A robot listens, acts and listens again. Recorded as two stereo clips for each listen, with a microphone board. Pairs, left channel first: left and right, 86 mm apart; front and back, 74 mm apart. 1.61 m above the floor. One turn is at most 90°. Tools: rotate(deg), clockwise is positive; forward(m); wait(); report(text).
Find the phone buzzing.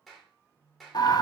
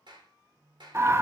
rotate(90)
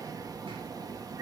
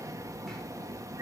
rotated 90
rotate(30)
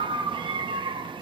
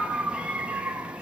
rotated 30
wait()
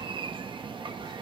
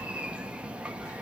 report("I heard a phone buzzing from this way, but can't make it out now.")